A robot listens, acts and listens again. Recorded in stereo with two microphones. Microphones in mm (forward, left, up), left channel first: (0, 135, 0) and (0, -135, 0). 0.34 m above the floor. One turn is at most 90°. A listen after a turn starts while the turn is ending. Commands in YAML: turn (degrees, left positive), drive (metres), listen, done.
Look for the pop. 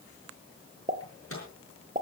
turn: -30
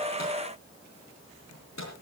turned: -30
listen: true
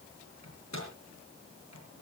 done: "I heard a pop, but can't make it out now. It was about straight ahead or 120° right."